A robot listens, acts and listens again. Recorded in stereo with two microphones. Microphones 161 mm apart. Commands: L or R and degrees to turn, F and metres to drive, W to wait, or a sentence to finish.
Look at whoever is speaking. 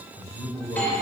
R15
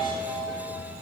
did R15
W
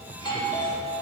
W
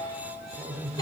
R30
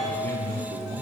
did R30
R130
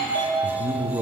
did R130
R20
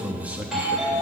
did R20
R10
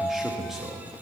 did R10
Found it: a man speaking, straight ahead, 1 to 2 m away.